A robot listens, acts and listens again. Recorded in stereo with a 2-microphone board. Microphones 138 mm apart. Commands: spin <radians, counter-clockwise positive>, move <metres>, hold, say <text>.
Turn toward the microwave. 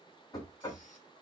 hold
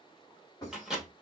spin -0.52
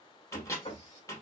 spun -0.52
spin 0.44
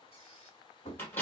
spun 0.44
spin 0.35
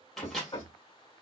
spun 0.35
say Facing the microwave.